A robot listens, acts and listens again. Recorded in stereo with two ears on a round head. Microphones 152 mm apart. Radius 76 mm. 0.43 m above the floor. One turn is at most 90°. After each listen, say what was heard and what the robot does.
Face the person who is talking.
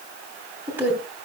Turn 30° right.
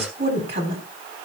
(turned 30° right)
So it is at 140° right. Turn 90° right.
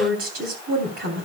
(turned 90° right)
The woman speaking is now 60° right. Turn 60° right.
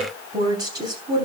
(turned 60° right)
The woman speaking is now 25° right. Turn 25° right.
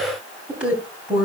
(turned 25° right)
Found it: a woman speaking, straight ahead.